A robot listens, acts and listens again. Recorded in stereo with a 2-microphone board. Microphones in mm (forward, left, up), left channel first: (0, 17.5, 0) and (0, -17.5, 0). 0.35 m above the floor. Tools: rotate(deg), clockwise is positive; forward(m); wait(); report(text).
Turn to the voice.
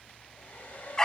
wait()
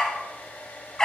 wait()
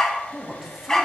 rotate(30)
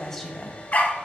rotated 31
rotate(-15)
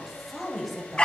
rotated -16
report("Found it: a woman speaking, straight ahead, 1 to 2 m away.")